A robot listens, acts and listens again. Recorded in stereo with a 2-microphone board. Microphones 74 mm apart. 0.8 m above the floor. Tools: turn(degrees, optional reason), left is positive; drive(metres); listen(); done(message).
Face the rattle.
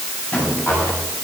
turn(degrees=30, reason="The rattle: about 30° left or 150° left.")
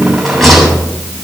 done("Found it: a rattle, straight ahead.")